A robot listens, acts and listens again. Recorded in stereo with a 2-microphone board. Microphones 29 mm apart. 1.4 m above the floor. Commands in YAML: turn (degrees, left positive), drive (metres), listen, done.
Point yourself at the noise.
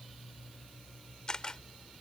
turn: 30
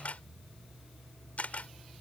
turn: 120
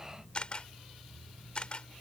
turn: 40
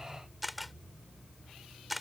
done: "Facing the camera shutter."